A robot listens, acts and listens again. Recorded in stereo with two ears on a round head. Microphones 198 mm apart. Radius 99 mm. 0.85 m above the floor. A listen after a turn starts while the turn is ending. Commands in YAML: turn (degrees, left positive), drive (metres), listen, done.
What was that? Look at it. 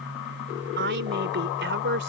turn: -55
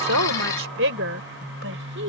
turn: -60
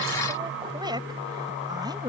turn: -20
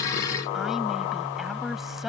listen: true
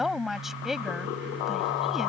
done: "Found it: a woman speaking, straight ahead."